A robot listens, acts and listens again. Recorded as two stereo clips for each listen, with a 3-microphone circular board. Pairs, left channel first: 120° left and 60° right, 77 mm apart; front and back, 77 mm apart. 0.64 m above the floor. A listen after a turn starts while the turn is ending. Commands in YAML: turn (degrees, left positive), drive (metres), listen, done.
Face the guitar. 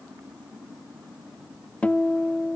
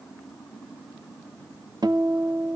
turn: -170
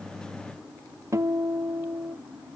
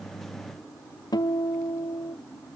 turn: -15
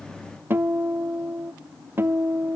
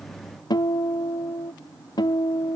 done: "Facing the guitar."